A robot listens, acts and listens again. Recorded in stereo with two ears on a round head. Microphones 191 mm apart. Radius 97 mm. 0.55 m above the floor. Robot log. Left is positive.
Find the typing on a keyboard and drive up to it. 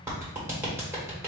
cmd idle
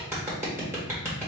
cmd idle
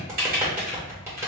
note: The typing on a keyboard: about 45° right or 135° right.
cmd yaw -45
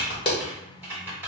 note: So it is at 15° right.
cmd yaw -15
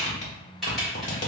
cmd fwd 1.0
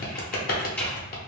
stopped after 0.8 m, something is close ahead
cmd idle
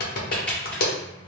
cmd idle
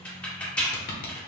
note: The typing on a keyboard is now 10° left.
cmd yaw +10
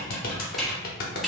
end: Arrived at the typing on a keyboard, straight ahead.